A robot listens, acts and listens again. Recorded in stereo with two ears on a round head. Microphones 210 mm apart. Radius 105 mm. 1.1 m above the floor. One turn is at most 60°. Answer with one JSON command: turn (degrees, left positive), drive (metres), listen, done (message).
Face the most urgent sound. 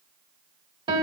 {"listen": true}
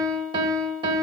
{"listen": true}
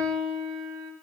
{"done": "I can't make out anything urgent, only a piano."}